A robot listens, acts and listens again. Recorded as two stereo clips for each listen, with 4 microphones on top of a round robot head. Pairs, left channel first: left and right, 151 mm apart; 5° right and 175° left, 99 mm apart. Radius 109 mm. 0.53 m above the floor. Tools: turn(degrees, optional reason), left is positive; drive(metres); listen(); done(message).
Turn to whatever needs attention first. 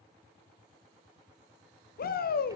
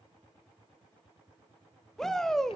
turn(degrees=80, reason="The shout: 80° left.")
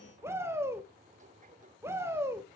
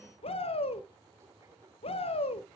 turn(degrees=-15, reason="The shout is now 15° right.")
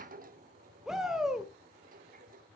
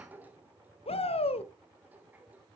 done("Found it: a shout, straight ahead, 1 to 2 m away.")